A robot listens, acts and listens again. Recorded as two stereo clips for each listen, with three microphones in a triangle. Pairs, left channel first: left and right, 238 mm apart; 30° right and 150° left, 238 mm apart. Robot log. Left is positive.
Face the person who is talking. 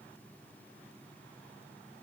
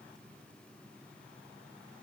cmd idle
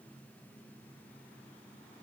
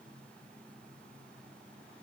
cmd idle
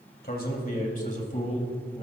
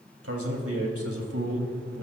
note: The man speaking: 155° left.
cmd yaw +155
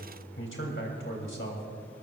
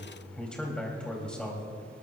note: The man speaking is now 55° left.
cmd yaw +55
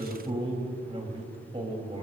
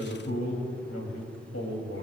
note: The man speaking is now 25° right.
cmd yaw -25
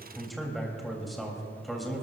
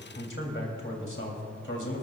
end: Found it: a man speaking, straight ahead.